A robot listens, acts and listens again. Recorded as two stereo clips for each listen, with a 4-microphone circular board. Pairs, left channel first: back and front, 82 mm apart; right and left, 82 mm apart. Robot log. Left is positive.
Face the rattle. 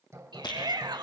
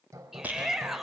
note: The rattle: 160° left.
cmd yaw +160
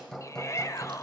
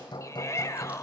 cmd idle
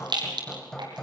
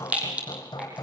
note: The rattle is now 15° left.
cmd yaw +15
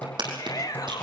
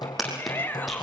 end: Facing the rattle.